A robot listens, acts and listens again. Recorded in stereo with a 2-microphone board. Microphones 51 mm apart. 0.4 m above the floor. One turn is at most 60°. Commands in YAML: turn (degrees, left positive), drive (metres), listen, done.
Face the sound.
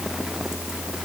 listen: true
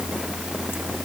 listen: true
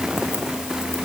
done: "I can't make out anything."